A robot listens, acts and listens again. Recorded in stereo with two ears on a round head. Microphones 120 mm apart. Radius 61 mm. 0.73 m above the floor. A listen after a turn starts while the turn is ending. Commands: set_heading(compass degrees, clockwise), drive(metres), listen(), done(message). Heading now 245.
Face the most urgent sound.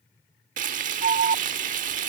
set_heading(295)
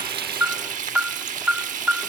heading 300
set_heading(310)
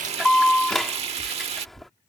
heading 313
done("Facing the alarm.")